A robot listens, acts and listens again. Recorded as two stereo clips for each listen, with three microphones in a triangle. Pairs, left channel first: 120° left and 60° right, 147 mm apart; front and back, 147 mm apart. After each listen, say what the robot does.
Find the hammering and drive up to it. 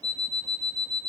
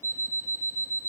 Keep listening.
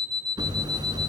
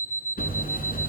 Drive 1.0 m forward.
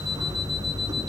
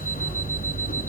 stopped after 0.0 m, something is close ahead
Something is in my way. I am facing the hammering but have not reached it.